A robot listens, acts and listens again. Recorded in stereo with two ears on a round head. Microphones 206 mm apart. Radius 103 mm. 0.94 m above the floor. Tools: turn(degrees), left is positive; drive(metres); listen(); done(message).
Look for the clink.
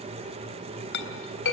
turn(degrees=55)
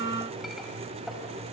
listen()
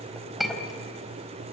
done("Found it: a clink, straight ahead, 2 to 4 m away.")